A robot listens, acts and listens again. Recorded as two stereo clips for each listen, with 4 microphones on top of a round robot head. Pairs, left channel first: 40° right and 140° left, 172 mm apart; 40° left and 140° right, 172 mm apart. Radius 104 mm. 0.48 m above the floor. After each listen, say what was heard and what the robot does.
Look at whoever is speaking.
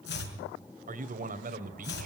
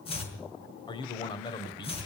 The man speaking: 105° left. Turn 105° left.
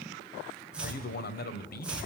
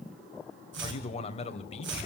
The man speaking is now 15° right. Turn 15° right.
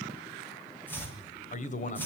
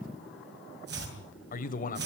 Facing the man speaking, 2 to 4 m away.